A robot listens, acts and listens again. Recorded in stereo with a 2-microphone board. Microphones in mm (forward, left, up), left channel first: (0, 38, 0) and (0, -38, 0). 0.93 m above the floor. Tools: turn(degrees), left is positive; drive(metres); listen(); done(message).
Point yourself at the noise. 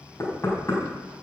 turn(degrees=40)
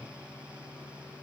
listen()
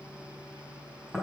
done("Facing the knocking, over 4 m away.")